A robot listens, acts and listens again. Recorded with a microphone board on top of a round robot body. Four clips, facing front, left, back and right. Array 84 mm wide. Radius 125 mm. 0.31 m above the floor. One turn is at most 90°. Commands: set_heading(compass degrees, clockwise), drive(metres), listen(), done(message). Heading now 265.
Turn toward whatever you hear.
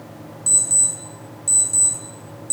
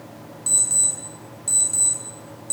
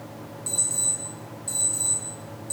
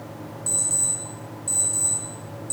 set_heading(195)
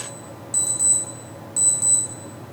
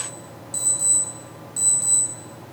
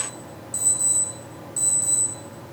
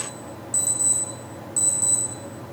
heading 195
set_heading(170)
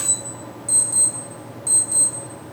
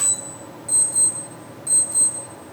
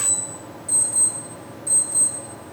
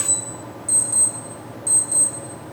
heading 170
set_heading(155)
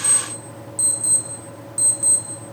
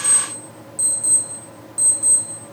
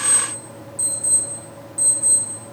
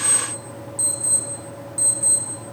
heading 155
done("Found it: an alarm clock, straight ahead.")